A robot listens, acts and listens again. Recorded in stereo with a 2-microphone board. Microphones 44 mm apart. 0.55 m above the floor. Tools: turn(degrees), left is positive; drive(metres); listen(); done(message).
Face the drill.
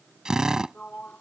turn(degrees=-30)
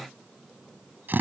turn(degrees=-135)
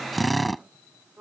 done("Found it: a drill, straight ahead.")